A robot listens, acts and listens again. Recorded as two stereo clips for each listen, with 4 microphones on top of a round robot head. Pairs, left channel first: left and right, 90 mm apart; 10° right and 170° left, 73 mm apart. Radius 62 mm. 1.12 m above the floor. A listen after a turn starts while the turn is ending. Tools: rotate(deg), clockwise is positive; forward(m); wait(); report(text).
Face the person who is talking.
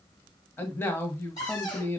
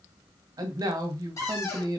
rotate(-150)
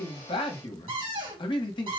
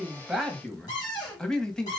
rotate(-70)
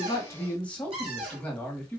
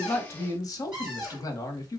rotate(-15)
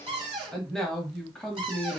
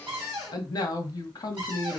report("Facing the man speaking, 1 to 2 m away.")